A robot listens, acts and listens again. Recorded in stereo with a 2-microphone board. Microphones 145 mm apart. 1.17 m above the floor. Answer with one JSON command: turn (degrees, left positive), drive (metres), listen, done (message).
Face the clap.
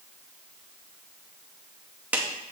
{"turn": -30}
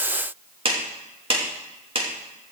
{"turn": -140}
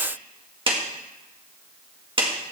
{"turn": -35}
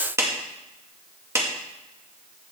{"turn": -20}
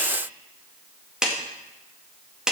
{"done": "Facing the clap, 1 to 2 m away."}